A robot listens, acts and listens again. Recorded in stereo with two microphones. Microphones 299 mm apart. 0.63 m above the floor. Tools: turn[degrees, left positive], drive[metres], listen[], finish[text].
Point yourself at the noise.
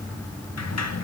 Thought: The sliding door: about 60° left or 120° left.
Action: turn[60]
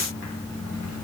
Action: listen[]
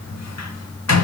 Thought: So it is at 60° left.
Action: turn[60]
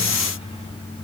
Action: listen[]
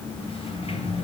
Thought: The sliding door is now 20° left.
Action: turn[20]
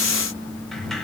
Action: finish[Facing the sliding door.]